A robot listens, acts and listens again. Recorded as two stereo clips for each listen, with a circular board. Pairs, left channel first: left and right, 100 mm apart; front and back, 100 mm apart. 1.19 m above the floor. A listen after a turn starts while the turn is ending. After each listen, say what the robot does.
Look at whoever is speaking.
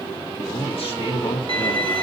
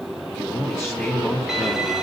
Turn 70° left.
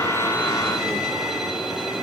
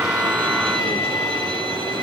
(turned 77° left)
Turn 10° right.
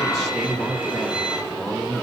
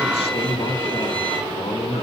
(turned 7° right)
Found it: a man speaking, straight ahead.